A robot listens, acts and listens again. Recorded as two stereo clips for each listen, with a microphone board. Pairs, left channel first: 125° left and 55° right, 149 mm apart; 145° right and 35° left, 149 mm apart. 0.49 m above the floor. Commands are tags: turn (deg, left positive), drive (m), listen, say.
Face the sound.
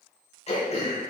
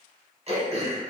<turn deg="80"/>
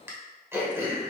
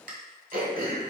<turn deg="20"/>
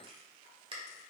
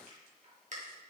<say>Facing the throat clearing, 1 to 2 m away.</say>